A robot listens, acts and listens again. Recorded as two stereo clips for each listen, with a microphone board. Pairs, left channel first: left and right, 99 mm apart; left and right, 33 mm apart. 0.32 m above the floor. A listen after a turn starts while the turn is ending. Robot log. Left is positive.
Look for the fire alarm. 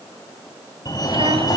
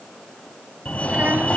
note: The fire alarm: about 40° left or 140° left.
cmd yaw +40
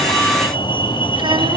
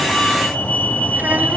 note: So it is at 85° left.
cmd yaw +85
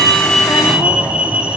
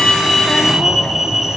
note: The fire alarm is now 15° right.
cmd yaw -15
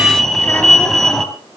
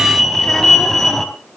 end: Found it: a fire alarm, straight ahead, 2 to 4 m away.